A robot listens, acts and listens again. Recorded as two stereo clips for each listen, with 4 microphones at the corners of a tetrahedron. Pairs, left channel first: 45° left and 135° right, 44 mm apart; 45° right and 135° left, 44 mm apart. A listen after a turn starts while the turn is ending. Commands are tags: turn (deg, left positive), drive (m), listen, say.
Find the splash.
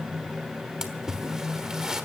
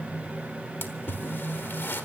<turn deg="-60"/>
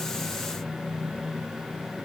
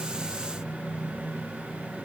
<say>I heard a splash from this way, but can't make it out now.</say>